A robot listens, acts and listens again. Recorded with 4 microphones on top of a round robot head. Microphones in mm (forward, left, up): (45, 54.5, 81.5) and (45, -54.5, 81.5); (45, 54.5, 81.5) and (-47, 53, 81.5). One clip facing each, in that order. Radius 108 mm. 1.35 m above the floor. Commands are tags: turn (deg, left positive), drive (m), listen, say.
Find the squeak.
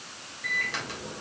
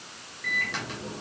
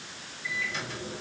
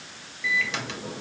<listen/>
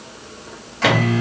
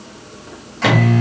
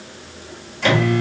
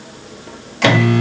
<listen/>
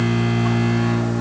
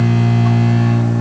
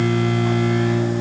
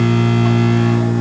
<say>I can't make out a squeak to turn to.</say>